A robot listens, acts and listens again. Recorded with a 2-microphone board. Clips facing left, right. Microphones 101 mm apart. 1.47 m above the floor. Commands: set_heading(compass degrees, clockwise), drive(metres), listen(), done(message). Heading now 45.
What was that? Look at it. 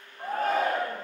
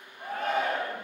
set_heading(5)
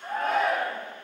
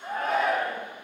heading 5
done("Facing the shout, under 1 m away.")